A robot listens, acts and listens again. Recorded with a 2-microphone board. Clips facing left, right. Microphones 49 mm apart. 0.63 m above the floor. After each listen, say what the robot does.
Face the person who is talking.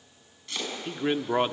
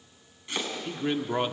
Turn 15° left.
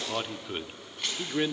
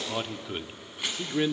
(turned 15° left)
Facing the man speaking.